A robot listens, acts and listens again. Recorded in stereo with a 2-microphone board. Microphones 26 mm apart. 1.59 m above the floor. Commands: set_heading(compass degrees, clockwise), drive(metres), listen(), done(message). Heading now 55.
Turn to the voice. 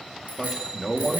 set_heading(75)
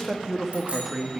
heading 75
set_heading(105)
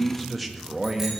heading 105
set_heading(135)
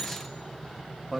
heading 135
done("Facing the man speaking.")